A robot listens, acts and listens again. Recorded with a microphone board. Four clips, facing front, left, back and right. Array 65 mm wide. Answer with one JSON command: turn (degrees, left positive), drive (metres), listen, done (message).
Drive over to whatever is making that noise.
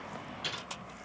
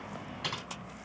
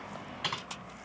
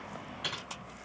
{"turn": 165}
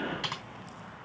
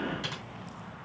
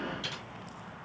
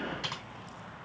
{"turn": -20}
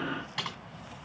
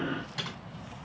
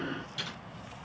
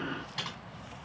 {"drive": 1.0}
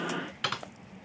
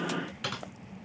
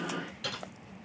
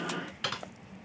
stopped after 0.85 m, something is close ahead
{"turn": -10}
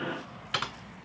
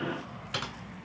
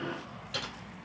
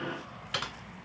{"done": "Arrived at the typing on a keyboard, straight ahead."}